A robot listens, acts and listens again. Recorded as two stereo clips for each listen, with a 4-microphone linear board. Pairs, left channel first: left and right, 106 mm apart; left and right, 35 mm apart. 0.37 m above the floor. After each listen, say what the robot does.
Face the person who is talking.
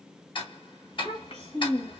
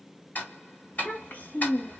Turn 70° left.
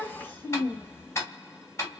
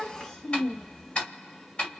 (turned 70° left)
Turn 20° left.
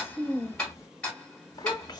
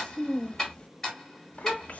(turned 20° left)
Turn 45° left.
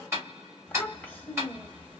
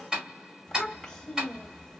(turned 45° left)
Turn 15° left.
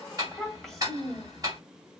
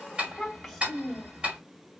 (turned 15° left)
Found it: a child speaking, straight ahead.